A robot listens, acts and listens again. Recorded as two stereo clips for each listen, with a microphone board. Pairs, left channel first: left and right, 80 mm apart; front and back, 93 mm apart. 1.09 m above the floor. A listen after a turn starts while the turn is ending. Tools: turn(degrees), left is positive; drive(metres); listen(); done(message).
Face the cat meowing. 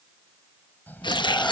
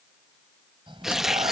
turn(degrees=155)
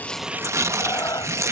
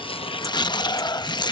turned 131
turn(degrees=50)
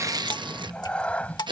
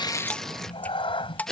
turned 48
turn(degrees=20)
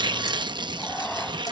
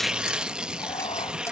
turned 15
turn(degrees=15)
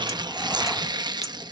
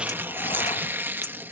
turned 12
listen()
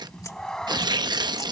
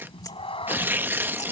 turn(degrees=10)
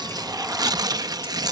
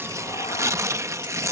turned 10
listen()
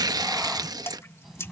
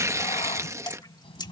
done("Facing the cat meowing.")